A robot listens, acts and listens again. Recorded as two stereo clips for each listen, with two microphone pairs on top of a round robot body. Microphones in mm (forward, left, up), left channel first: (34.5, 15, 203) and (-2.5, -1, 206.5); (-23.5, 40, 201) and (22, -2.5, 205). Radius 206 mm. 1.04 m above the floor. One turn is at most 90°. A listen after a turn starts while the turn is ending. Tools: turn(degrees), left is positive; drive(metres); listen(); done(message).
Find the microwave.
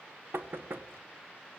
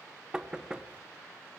listen()
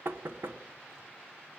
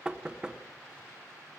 listen()
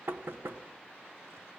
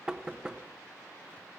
done("I can't make out a microwave, only knocking.")